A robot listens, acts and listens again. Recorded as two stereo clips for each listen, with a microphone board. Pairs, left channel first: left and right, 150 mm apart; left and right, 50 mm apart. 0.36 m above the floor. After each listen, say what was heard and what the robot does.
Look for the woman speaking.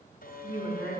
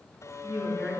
The woman speaking: about 35° right or 145° right. Turn 35° right.
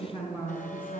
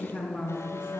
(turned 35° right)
So it is at 10° right. Turn 10° right.
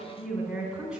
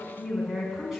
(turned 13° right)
Facing the woman speaking, 2 to 4 m away.